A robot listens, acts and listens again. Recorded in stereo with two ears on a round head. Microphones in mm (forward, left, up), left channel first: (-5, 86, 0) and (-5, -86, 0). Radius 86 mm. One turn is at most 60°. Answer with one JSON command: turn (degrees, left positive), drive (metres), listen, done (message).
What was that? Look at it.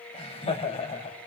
{"turn": 30}
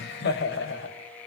{"turn": 60}
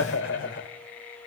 {"turn": 60}
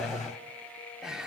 {"done": "Found it: laughter, straight ahead."}